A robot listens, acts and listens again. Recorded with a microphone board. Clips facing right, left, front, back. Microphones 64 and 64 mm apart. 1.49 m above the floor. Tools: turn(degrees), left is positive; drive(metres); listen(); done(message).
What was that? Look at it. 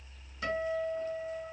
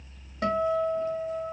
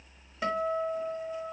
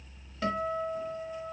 turn(degrees=75)
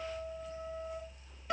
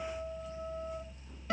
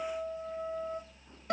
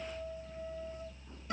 done("Found it: a guitar, straight ahead, 1 to 2 m away.")